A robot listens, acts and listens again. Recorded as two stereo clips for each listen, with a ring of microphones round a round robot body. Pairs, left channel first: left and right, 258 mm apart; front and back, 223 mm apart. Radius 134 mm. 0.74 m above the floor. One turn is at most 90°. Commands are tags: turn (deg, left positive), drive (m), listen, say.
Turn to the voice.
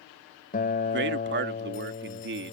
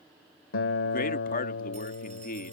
<turn deg="-50"/>
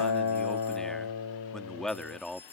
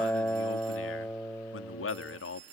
<say>Facing the man speaking.</say>